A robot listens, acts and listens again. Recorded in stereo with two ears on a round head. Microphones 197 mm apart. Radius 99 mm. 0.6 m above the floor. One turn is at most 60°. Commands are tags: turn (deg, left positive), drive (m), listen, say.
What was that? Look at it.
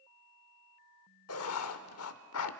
<turn deg="60"/>
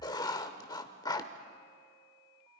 <turn deg="20"/>
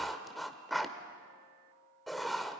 <say>Found it: writing, straight ahead.</say>